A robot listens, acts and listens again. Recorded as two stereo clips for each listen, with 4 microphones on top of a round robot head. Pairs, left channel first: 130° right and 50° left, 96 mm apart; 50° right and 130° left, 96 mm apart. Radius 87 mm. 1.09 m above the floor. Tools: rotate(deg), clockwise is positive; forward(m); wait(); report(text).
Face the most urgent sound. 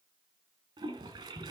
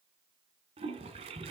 wait()
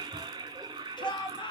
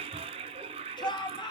rotate(90)
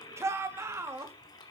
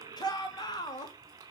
report("Facing the shout, 2 to 4 m away.")